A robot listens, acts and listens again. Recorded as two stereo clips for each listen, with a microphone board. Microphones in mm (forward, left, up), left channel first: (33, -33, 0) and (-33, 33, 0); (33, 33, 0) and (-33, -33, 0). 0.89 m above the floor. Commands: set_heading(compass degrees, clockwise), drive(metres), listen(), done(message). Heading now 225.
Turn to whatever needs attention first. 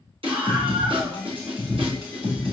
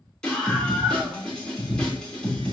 set_heading(100)
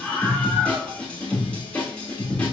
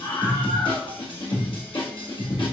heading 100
set_heading(65)
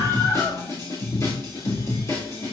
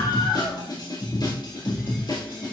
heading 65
set_heading(55)
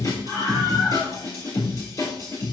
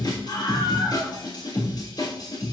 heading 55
done("Found it: a scream, straight ahead.")